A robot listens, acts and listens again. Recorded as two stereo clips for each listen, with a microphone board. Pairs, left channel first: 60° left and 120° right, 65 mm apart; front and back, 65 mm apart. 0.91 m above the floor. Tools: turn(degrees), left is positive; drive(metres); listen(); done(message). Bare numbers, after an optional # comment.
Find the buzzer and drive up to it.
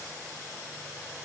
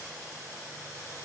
listen()
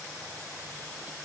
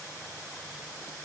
listen()
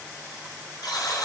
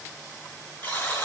# The buzzer: 65° left.
turn(65)
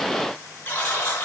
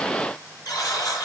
drive(1.0)
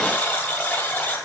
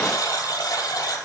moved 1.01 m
drive(1.0)
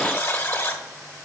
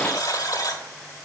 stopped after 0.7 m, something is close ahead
done("I am next to the buzzer.")